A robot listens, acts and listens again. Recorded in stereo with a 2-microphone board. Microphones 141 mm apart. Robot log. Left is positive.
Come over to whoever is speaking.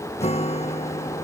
cmd idle
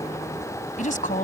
note: The woman speaking: about 65° left or 115° left.
cmd yaw +65
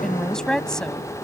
cmd fwd 1.0
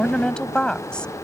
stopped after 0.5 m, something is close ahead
end: Blocked. The woman speaking is further on, straight ahead.